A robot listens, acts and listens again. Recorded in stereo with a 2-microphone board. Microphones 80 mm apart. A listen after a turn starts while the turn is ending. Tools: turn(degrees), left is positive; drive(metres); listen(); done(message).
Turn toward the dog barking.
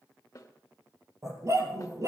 turn(degrees=-40)
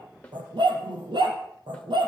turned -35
turn(degrees=-100)
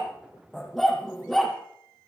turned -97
done("Found it: a dog barking, straight ahead, over 4 m away.")